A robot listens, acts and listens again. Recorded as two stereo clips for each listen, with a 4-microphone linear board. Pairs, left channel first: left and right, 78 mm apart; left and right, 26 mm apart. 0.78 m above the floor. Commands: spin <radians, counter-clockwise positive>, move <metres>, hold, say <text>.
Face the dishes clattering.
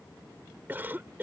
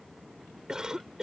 hold
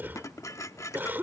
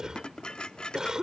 spin 0.79
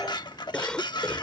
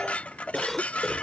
spin 1.66
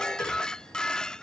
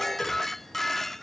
spin 0.17
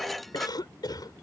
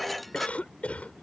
hold
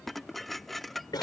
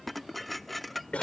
say Facing the dishes clattering.